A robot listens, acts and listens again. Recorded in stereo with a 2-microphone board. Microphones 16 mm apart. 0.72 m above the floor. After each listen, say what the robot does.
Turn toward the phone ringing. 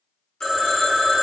Turn 35° left.
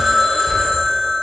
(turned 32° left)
Turn 110° left.
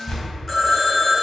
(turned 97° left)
Turn 15° left.
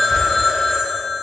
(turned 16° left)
Found it: a phone ringing, straight ahead, under 1 m away.